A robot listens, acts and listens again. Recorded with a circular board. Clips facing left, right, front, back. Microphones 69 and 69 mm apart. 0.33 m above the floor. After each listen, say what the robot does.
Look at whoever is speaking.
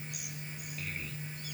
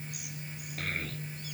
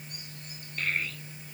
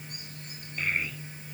Turn 105° right.
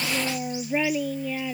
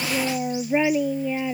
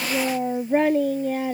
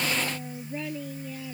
Turn 20° right.
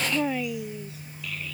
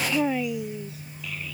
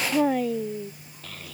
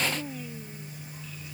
Turn 10° right.
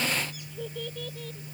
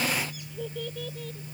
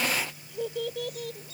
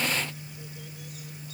Facing the child speaking.